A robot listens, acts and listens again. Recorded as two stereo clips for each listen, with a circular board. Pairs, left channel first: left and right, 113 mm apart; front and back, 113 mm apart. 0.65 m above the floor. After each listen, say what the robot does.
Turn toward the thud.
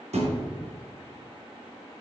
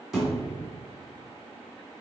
Turn 95° right.
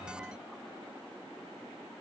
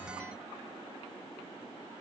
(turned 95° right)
I heard a thud from this way, but can't make it out now.